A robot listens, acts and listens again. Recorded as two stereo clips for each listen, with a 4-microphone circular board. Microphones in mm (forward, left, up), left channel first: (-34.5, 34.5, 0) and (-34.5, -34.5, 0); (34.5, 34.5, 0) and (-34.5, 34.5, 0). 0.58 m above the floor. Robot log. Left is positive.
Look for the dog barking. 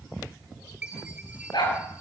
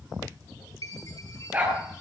note: The dog barking: 115° left.
cmd yaw +115
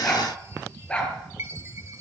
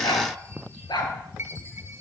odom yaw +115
note: The dog barking is now 15° left.
cmd yaw +15
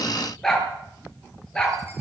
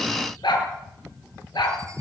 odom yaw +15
note: The dog barking is now 10° left.
cmd yaw +10
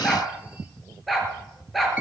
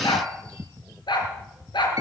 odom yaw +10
end: Facing the dog barking.